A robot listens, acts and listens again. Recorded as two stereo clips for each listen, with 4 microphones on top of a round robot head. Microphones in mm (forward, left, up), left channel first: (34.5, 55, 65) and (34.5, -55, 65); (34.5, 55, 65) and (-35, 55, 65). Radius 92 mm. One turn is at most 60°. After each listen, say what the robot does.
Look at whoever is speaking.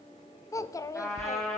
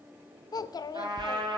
Turn 30° left.
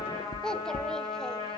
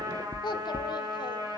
Facing the child speaking.